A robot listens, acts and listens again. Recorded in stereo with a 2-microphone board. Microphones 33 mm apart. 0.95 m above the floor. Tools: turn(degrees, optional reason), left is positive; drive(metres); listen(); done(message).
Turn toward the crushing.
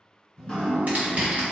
turn(degrees=-50, reason="The crushing: about 50° right or 130° right.")
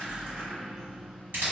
turn(degrees=-85, reason="So it is at 85° right.")
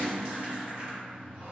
listen()
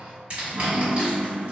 turn(degrees=-35, reason="The crushing is now 35° right.")
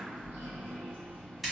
done("Facing the crushing, 1 to 2 m away.")